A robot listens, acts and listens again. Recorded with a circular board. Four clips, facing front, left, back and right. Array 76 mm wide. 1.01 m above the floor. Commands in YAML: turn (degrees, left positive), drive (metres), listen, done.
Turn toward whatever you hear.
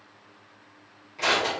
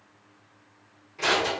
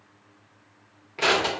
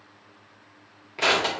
turn: -125
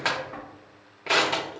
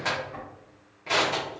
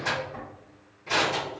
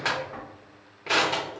turn: -20
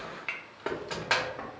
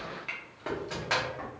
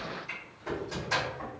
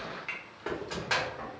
done: "Found it: crushing, straight ahead, under 1 m away."